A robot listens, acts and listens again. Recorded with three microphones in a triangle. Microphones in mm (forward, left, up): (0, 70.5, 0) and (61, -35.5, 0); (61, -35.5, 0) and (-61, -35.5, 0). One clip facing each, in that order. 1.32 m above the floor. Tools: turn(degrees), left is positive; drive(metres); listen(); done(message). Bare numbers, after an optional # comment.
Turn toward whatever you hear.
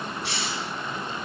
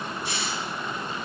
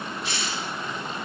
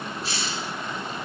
# The hiss: 125° left.
turn(125)
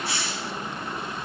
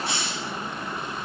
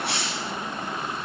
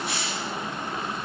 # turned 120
done("Found it: a hiss, straight ahead, 1 to 2 m away.")